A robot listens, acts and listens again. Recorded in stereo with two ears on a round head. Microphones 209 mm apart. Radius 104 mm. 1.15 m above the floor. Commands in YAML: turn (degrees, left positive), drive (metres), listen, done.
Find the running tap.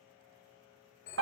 listen: true
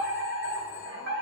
listen: true
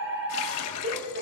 turn: 75
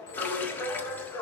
listen: true
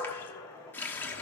turn: 10
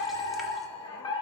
listen: true
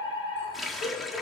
done: "Facing the running tap."